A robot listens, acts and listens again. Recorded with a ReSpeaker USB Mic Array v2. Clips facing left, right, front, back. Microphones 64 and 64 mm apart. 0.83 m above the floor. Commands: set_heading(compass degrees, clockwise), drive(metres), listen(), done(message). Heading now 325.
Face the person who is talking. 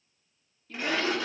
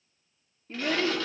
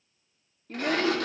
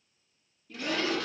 set_heading(355)
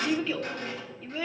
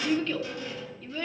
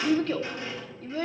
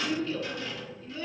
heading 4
set_heading(354)
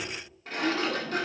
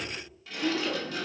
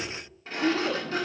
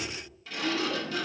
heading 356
done("Facing the child speaking, 1 to 2 m away.")